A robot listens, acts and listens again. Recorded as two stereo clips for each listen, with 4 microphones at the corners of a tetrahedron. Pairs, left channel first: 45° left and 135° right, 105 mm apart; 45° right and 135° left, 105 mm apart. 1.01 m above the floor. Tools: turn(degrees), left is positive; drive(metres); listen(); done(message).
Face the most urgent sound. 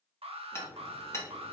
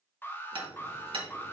turn(degrees=-115)
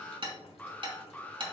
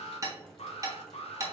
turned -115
turn(degrees=-30)
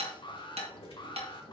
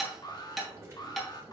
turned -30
done("Found it: an alarm, straight ahead.")